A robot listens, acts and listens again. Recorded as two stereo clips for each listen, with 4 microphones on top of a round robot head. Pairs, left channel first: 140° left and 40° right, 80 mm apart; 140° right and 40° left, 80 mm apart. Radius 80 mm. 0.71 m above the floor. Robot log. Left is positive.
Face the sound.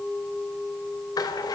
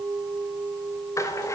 note: The rattle: 170° left.
cmd yaw +170
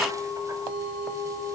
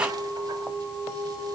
cmd idle
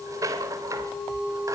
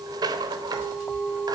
end: Facing the rattle.